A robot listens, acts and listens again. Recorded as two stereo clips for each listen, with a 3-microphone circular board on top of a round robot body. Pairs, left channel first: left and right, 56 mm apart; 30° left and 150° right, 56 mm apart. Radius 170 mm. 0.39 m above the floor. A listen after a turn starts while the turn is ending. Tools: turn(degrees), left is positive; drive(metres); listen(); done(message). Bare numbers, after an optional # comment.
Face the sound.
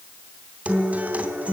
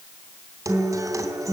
# The guitar: 155° right.
turn(-155)
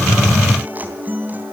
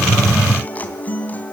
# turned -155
# The guitar is now 30° right.
turn(-30)
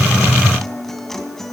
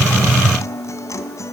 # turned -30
done("Found it: a guitar, straight ahead.")